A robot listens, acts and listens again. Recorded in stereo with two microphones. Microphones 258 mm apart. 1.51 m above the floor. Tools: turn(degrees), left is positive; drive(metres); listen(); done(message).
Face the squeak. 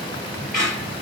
turn(degrees=-40)
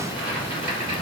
listen()
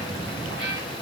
listen()
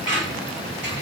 turn(degrees=-95)
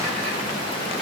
listen()
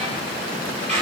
turn(degrees=-30)
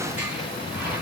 listen()
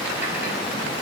listen()
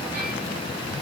done("I heard a squeak from this way, but can't make it out now.")